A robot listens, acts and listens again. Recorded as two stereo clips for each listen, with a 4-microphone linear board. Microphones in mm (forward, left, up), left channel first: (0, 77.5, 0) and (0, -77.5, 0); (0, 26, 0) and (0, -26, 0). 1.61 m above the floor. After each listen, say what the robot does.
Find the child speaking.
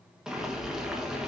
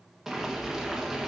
Keep listening.
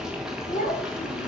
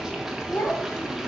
Turn 65° left.
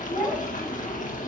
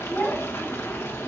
Turn 15° left.
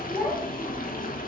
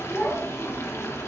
Found it: a child speaking, straight ahead, 2 to 4 m away.